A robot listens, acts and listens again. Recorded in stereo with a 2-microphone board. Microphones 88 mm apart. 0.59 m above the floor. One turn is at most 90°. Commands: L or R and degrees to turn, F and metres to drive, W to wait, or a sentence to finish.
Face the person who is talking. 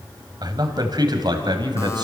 R55
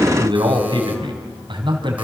R65
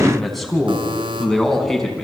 Found it: a man speaking, straight ahead, over 4 m away.